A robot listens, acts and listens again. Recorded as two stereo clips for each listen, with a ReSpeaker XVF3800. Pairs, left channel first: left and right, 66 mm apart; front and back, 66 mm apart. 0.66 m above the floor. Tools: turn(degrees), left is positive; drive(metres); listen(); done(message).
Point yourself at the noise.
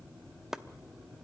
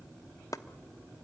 turn(degrees=-10)
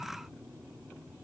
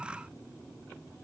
listen()
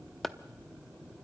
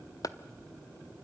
done("Facing the chopping, under 1 m away.")